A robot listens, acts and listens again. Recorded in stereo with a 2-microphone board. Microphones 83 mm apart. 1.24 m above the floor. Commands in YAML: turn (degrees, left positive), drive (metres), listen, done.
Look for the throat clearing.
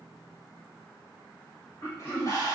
turn: 30
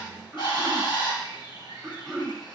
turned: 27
done: "Facing the throat clearing."